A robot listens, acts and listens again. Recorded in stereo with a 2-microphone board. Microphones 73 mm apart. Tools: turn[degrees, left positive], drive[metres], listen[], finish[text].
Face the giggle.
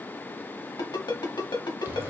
Action: listen[]
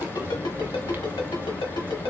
Action: listen[]
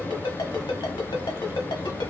Action: finish[I can't make out a giggle, only frying and a ringtone.]